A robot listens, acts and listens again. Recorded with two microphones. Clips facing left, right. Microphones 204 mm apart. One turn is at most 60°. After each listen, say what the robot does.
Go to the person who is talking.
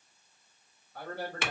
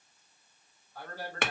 Turn 60° left.
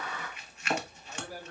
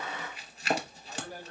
Drive 1.0 m forward.
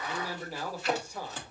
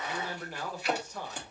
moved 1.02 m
Turn 10° left.
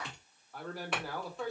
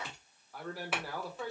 Drive 1.0 m forward.
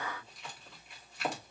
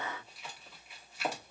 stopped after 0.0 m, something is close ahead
Keep listening.
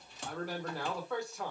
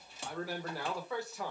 Arrived at the man speaking, straight ahead.